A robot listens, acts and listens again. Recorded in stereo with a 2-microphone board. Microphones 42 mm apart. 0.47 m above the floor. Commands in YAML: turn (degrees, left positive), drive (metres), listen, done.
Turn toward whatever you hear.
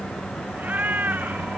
turn: -40
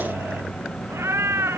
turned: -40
turn: -100
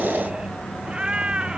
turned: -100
turn: -20
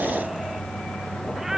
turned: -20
turn: -10
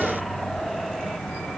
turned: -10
listen: true
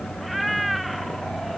done: "Found it: a cat meowing, straight ahead."